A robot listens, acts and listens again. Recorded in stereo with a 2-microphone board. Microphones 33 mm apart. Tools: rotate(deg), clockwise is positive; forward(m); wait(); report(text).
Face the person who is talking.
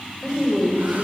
rotate(-30)
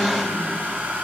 wait()
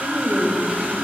rotate(30)
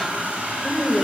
rotate(-10)
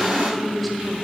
report("Found it: a woman speaking, straight ahead, 1 to 2 m away.")